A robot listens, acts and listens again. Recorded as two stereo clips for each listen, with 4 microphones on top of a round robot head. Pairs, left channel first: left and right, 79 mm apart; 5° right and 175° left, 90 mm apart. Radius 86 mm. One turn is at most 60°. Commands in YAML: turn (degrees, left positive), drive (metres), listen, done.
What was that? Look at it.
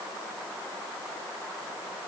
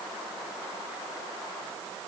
listen: true
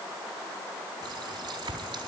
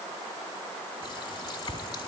turn: -45
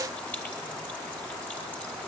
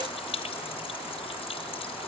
turn: 15
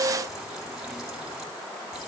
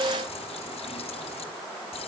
listen: true
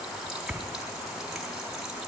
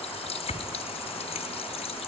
done: "Found it: a running tap, straight ahead."